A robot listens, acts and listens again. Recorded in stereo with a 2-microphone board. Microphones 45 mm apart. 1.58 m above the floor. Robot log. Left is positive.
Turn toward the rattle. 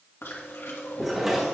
cmd yaw -30
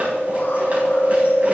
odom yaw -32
cmd idle
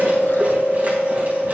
cmd idle
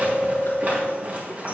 note: So it is at 140° right.
cmd yaw -140
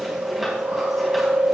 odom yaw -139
cmd idle
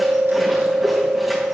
cmd idle
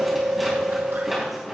end: Found it: a rattle, straight ahead, over 4 m away.